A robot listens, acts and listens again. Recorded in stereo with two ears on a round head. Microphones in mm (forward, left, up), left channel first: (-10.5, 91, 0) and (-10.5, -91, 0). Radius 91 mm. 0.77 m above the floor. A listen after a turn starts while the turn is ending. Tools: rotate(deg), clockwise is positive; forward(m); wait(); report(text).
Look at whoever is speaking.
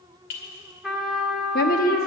rotate(-45)
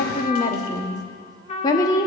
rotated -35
rotate(-20)
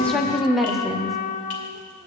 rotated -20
report("Found it: a woman speaking, straight ahead.")